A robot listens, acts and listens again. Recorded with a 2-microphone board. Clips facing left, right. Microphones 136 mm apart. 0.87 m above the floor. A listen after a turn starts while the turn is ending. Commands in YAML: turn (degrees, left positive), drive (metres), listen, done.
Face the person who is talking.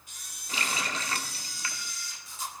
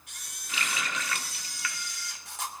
listen: true
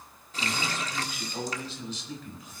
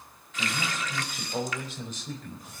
turn: -50
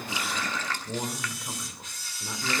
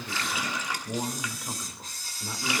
done: "Facing the man speaking, 2 to 4 m away."